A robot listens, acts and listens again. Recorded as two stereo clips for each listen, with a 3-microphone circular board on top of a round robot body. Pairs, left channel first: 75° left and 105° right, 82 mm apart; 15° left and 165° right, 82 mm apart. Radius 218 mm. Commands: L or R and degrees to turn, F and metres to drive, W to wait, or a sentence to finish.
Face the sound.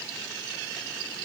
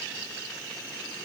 W
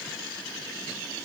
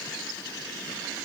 W
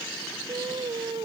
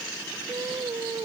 R120
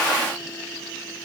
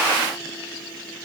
W
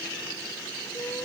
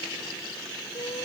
W
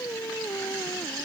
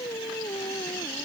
L15
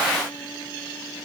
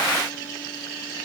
W
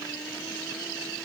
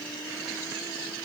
W
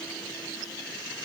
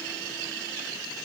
Facing where the singing came from. I can't hear it now.